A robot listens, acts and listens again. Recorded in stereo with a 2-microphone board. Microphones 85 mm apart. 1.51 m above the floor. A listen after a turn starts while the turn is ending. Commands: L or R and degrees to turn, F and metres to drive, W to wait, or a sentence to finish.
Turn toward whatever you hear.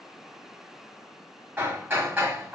R25
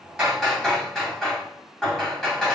Facing the hammering, 1 to 2 m away.